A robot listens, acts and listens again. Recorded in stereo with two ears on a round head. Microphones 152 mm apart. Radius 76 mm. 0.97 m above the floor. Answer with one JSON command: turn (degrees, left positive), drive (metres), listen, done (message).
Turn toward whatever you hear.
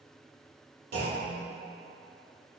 {"turn": -65}
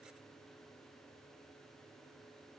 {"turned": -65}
{"listen": true}
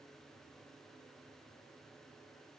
{"done": "I heard a clunk, but can't make it out now. It was about straight ahead or 50° right."}